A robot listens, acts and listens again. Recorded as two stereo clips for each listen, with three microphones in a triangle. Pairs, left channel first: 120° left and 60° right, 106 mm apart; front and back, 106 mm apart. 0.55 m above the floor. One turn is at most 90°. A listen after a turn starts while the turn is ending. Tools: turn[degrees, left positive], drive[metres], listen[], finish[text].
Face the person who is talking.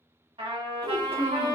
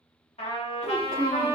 Thought: The child speaking: 50° right.
Action: turn[-50]
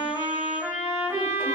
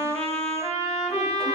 Action: listen[]
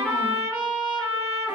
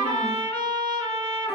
Action: listen[]
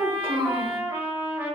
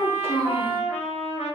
Thought: The child speaking is now 20° right.
Action: turn[-20]
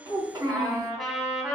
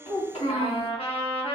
Action: finish[Found it: a child speaking, straight ahead, 1 to 2 m away.]